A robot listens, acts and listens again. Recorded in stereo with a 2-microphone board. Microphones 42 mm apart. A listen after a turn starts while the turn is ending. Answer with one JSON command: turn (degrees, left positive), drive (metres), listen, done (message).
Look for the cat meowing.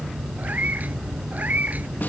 {"turn": -35}
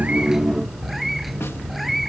{"done": "Found it: a cat meowing, straight ahead."}